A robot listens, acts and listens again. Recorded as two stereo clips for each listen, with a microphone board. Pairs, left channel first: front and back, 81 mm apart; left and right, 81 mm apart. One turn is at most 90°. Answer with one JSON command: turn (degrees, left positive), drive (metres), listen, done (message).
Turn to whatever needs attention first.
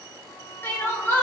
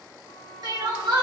{"turn": -60}
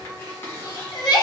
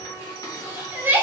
{"turn": -25}
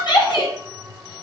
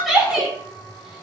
{"done": "Facing the crying."}